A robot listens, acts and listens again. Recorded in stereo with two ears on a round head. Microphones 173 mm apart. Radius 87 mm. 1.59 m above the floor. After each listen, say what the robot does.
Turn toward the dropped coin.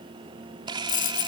Turn 50° left.
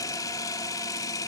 Keep listening.
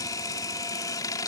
I heard a dropped coin, but can't make it out now. It was about straight ahead or 80° left.